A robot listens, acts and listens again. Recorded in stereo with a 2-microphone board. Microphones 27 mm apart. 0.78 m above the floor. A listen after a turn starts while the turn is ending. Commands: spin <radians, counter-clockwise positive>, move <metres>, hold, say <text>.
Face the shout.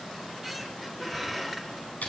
hold
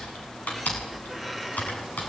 hold
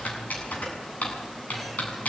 say I can't make out a shout to turn to.